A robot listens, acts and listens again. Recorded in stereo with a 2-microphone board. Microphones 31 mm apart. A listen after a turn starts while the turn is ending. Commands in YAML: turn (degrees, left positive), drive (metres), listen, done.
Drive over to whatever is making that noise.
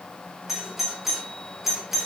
turn: -30
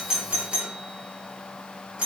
turn: -140
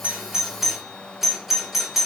drive: 1.0
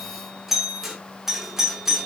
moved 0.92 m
drive: 1.0
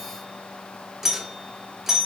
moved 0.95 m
turn: -15
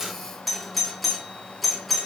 drive: 1.0
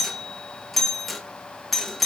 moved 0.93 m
drive: 1.0
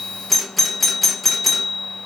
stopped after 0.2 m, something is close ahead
done: "Arrived at the doorbell, straight ahead."